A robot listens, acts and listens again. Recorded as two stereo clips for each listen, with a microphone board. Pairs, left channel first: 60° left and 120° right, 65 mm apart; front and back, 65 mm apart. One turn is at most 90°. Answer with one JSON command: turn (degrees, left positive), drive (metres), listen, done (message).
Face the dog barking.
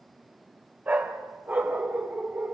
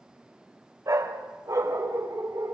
{"turn": 90}
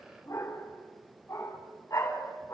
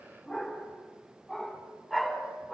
{"turn": 90}
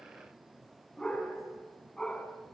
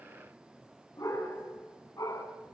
{"turn": -10}
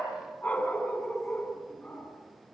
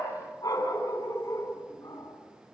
{"done": "Facing the dog barking."}